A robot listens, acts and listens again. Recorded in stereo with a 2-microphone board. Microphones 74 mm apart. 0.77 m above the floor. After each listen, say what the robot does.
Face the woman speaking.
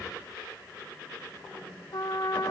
Keep listening.
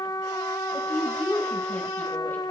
Turn 20° left.
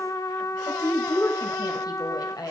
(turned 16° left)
Turn 120° left.
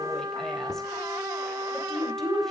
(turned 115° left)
Found it: a woman speaking, straight ahead, 2 to 4 m away.